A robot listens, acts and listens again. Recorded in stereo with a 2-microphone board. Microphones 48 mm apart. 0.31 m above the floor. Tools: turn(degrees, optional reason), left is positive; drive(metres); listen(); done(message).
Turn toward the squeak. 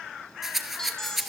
turn(degrees=30)
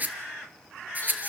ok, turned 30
listen()
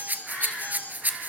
turn(degrees=140, reason="So it is at 140° left.")
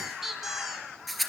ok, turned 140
done("Facing the squeak.")